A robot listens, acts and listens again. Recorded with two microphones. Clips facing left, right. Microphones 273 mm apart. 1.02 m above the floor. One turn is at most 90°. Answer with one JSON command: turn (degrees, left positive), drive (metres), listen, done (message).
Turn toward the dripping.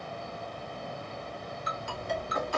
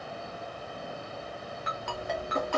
{"turn": -35}
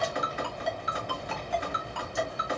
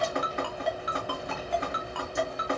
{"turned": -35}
{"turn": -90}
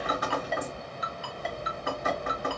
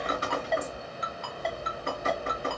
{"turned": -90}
{"turn": -30}
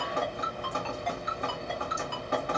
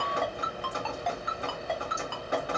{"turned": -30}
{"turn": -15}
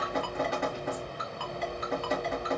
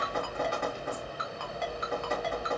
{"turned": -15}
{"done": "Facing the dripping."}